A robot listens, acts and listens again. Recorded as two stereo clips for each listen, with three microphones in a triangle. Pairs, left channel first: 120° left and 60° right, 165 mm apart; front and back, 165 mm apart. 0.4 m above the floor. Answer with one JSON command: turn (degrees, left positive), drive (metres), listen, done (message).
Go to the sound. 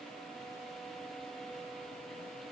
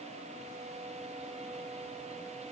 {"listen": true}
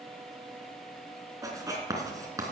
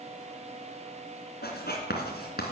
{"turn": 10}
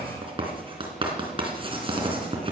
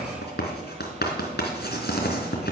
{"drive": 1.0}
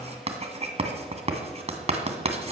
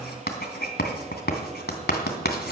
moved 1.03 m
{"turn": -10}
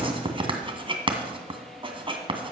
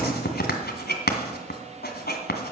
{"drive": 1.0}
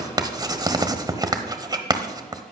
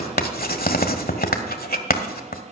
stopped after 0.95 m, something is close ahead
{"done": "I am next to the writing."}